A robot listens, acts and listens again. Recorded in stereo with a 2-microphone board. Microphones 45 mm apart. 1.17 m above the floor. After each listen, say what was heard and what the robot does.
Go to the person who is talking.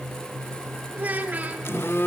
The child speaking: about 35° right or 145° right. Turn 35° right.
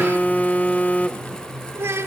So it is at 115° right. Turn 115° right.
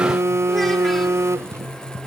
Keep listening.
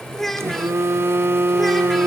Drive 1.0 m forward.
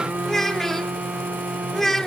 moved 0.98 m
The child speaking is now 10° left. Turn 10° left.
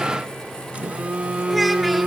Keep listening.
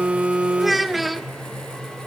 Drive 1.0 m forward.
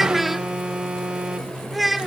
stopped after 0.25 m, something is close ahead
Arrived at the child speaking, straight ahead.